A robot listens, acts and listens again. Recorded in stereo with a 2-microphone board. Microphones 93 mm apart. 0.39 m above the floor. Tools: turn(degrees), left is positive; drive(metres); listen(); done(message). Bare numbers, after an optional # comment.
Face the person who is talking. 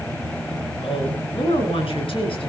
turn(90)
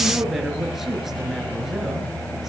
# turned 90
done("Facing the woman speaking, over 4 m away.")